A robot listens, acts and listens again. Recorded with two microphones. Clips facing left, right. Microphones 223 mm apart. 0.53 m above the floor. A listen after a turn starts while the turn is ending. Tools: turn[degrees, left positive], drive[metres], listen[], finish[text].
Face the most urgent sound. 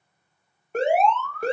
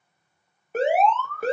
Action: turn[-30]
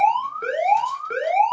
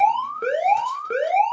Thought: So it is at 145° right.
Action: turn[-145]
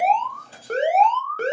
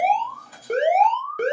Thought: The alarm is now 15° right.
Action: turn[-15]
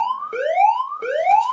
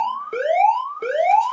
Action: finish[Found it: an alarm, straight ahead.]